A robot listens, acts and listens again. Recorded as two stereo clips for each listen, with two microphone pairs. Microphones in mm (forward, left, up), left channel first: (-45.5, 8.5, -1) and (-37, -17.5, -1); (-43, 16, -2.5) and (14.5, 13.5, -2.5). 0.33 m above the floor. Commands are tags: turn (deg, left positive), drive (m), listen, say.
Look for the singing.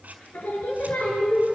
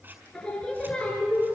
<turn deg="100"/>
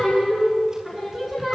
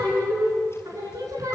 <turn deg="10"/>
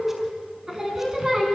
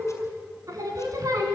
<say>Found it: singing, straight ahead, 2 to 4 m away.</say>